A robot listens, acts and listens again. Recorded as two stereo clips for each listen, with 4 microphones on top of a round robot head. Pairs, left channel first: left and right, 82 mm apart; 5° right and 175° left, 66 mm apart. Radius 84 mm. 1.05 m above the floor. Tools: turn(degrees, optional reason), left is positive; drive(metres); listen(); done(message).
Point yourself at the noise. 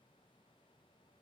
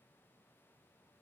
listen()
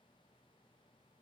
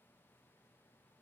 listen()
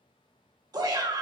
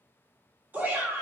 turn(degrees=-125, reason="The shout: 125° right.")
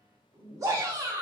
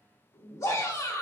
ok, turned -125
turn(degrees=-40, reason="The shout is now 40° right.")
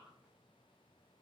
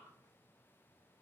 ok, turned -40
listen()
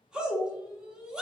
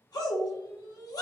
turn(degrees=-10, reason="The shout is now 10° right.")
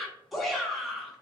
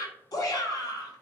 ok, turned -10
done("Facing the shout, 1 to 2 m away.")